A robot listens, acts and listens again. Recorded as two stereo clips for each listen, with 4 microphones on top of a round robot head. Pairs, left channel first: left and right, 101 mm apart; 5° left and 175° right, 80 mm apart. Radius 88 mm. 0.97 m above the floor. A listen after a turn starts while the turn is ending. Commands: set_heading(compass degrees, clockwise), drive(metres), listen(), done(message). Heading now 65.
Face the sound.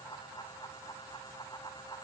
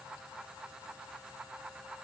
listen()
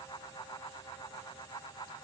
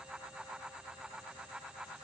listen()
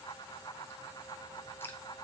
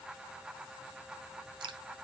set_heading(265)
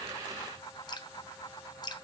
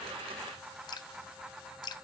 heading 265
set_heading(225)
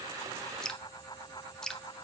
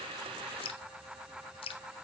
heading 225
done("Found it: dripping, straight ahead, under 1 m away.")